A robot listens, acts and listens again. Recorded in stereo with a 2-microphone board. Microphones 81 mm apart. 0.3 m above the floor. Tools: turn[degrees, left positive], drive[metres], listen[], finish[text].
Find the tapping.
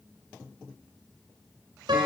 Action: listen[]
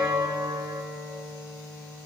Action: listen[]
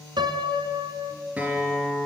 Action: finish[I can't make out tapping, only a guitar and a piano.]